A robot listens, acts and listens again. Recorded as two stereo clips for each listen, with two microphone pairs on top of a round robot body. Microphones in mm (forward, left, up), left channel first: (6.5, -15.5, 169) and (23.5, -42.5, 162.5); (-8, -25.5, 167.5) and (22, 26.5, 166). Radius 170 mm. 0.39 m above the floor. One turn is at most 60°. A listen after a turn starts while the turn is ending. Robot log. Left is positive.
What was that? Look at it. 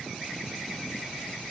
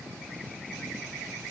cmd idle
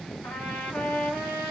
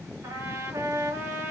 note: The trumpet: 105° left.
cmd yaw +60
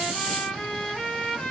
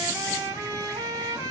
note: The trumpet is now 65° left.
cmd yaw +60
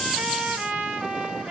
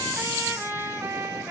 end: Found it: a trumpet, straight ahead, under 1 m away.